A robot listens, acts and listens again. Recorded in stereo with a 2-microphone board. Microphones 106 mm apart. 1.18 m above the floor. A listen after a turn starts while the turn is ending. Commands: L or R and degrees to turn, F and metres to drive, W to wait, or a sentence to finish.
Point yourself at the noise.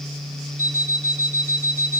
L35
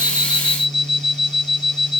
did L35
L110
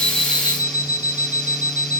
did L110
R20
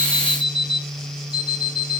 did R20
R10
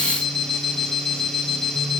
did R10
Facing the alarm clock.